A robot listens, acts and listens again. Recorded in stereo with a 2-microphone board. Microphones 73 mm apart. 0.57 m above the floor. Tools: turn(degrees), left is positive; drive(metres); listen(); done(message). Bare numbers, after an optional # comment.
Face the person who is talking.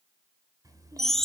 # The child speaking: about 55° right or 125° right.
turn(-55)
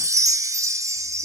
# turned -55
listen()
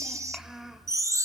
done("Facing the child speaking.")